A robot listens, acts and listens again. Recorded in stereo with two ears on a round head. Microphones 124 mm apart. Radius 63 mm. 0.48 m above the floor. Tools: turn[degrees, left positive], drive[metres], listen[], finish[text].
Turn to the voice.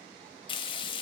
Action: listen[]
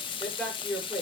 Action: turn[30]
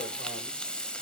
Action: listen[]
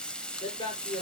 Thought: So it is at 145° left.
Action: turn[145]
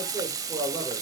Thought: The man speaking is now 15° right.
Action: turn[-15]
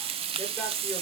Action: listen[]
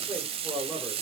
Action: finish[Facing the man speaking, over 4 m away.]